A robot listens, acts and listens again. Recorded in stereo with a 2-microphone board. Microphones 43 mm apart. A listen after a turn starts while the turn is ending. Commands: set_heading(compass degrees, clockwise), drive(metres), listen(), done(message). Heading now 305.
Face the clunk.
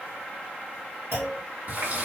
set_heading(35)
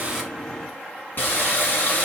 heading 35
done("I heard a clunk from this way, but can't make it out now.")